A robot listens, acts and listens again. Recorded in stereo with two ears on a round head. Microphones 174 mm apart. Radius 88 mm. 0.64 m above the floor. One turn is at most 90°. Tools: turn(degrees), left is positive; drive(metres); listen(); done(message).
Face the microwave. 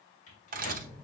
turn(degrees=45)
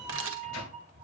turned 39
turn(degrees=90)
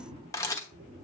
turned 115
turn(degrees=-15)
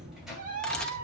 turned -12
listen()
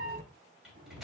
done("Found it: a microwave, straight ahead.")